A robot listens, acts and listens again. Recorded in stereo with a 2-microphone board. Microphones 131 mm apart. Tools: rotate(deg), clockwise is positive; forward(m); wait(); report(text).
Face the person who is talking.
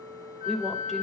rotate(-30)
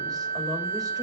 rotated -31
wait()
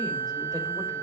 wait()
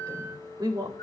rotate(30)
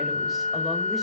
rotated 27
wait()
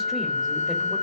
wait()
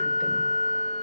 report("Facing where the woman speaking came from. I can't hear it now.")